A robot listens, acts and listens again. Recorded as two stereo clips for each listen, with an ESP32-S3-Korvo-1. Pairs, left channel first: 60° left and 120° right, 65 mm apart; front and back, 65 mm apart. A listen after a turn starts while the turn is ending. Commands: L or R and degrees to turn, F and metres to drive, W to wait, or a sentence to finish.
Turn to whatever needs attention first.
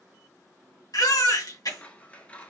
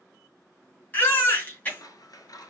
L60
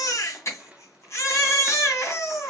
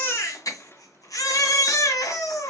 L20
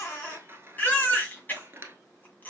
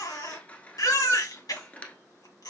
Facing the baby crying, 2 to 4 m away.